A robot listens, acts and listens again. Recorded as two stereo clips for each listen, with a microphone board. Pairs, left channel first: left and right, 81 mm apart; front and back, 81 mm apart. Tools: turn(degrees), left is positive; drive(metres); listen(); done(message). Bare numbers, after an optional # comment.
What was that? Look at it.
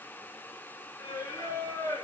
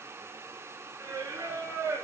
# The singing: 125° left.
turn(125)
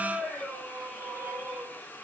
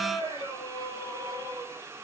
done("Facing the singing, over 4 m away.")